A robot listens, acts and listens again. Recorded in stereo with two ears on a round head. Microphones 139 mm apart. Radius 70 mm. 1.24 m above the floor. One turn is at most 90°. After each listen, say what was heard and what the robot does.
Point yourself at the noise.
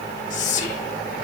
The whispering: about 45° left or 135° left. Turn 45° left.
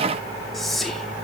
Facing the whispering.